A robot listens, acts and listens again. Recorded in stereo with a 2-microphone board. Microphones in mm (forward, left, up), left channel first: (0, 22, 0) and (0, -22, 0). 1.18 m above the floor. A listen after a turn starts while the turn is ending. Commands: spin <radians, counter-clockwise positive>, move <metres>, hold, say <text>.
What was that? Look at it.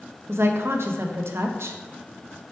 spin -1.22
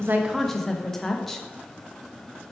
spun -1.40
spin 0.17
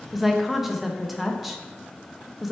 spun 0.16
say Facing the woman speaking.